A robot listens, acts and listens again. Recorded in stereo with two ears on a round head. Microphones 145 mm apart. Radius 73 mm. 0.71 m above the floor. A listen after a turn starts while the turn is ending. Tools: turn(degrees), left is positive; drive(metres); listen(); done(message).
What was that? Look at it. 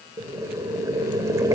turn(degrees=-20)
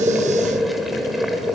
done("Found it: boiling, straight ahead, 2 to 4 m away.")